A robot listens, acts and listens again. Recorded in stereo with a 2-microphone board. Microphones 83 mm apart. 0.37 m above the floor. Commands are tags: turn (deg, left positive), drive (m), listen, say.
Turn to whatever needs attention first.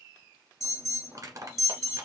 <turn deg="40"/>
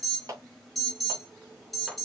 <say>Found it: an alarm, straight ahead.</say>